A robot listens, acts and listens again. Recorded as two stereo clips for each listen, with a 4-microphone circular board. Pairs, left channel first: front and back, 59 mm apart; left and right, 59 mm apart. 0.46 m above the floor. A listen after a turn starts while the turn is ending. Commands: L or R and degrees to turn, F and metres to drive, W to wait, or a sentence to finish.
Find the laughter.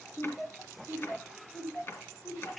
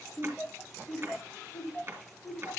L30
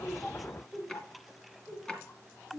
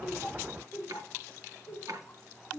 L15
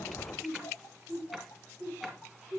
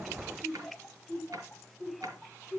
L10
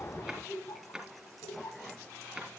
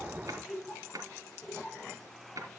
Facing the laughter.